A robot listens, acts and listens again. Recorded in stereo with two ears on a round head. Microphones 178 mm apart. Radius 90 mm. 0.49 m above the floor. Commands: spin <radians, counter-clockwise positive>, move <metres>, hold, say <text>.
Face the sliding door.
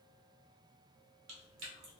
hold
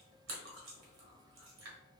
hold
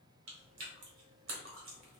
say I can't make out a sliding door, only chewing.